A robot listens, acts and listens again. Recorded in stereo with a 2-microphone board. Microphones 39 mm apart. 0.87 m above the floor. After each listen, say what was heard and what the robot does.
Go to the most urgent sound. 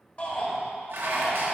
The shout: about 35° left or 145° left. Turn 35° left.
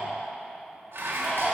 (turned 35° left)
Drive 1.0 m forward.
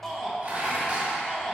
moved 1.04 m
The shout is now 10° left. Turn 10° left.
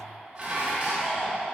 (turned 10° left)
Drive 1.0 m forward.
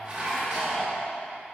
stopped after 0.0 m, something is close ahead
Keep listening.
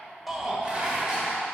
Arrived at the shout, straight ahead.